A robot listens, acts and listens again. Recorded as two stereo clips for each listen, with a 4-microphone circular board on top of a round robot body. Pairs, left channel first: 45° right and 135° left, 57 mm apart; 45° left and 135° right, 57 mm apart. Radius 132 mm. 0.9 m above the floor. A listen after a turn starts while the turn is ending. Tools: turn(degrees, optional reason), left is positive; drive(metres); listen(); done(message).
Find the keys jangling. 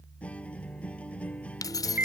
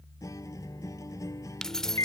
turn(degrees=-35, reason="The keys jangling: 35° right.")
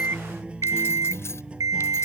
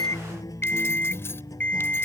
listen()
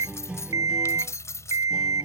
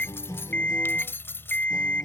done("Facing the keys jangling.")